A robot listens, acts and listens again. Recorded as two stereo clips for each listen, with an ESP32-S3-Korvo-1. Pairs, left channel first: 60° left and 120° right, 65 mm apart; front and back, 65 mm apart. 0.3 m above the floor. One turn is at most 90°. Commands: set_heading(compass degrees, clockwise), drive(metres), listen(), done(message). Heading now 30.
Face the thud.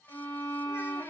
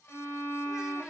listen()
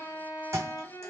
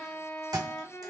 set_heading(120)
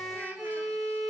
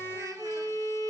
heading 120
set_heading(195)
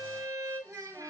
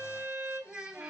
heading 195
done("I heard a thud from this way, but can't make it out now.")